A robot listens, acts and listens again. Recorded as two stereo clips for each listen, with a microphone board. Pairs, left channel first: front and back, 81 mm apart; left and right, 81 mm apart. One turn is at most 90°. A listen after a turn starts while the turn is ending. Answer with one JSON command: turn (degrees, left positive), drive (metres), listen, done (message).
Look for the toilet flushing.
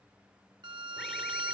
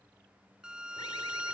{"listen": true}
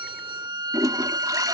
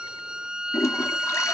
{"turn": 90}
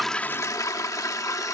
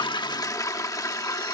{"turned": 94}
{"turn": 45}
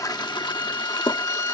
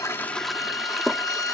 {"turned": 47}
{"done": "Facing the toilet flushing."}